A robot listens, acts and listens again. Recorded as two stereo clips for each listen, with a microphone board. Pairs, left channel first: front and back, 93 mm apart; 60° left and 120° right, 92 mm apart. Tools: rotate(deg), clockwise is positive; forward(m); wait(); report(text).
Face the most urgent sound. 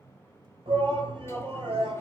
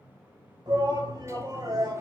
rotate(160)
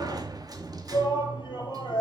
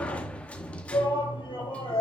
rotate(-35)
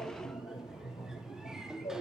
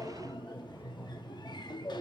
report("Facing the shout, over 4 m away.")